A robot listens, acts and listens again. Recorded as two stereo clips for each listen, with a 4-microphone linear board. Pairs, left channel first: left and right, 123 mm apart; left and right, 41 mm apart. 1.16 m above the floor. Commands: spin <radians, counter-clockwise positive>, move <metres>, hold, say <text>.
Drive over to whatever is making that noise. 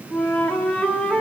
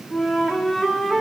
spin 0.52
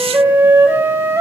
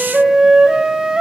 spin -0.44
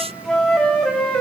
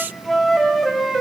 move 1.0
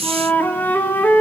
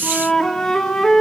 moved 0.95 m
spin 0.26
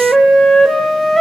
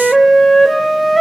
move 1.0
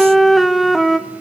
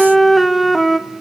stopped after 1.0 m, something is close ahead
say I am next to the flute.